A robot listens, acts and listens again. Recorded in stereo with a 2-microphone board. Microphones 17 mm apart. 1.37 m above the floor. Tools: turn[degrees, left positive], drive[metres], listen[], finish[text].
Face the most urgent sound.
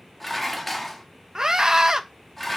Thought: The scream: about 30° right or 150° right.
Action: turn[-30]
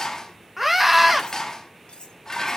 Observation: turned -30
Action: finish[Facing the scream.]